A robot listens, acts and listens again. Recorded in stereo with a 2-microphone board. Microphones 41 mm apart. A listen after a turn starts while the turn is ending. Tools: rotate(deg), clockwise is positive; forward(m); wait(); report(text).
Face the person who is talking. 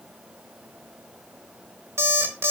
wait()
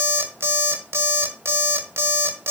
wait()
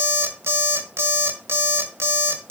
report("I can't make out anyone speaking, only an alarm clock.")